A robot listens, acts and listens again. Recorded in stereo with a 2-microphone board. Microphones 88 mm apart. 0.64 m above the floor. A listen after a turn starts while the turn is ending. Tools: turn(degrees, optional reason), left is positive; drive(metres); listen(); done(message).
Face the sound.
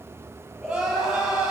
turn(degrees=-30)
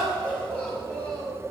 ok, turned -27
turn(degrees=25, reason="So it is at 25° left.")
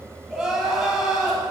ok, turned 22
done("Found it: crying, straight ahead, over 4 m away.")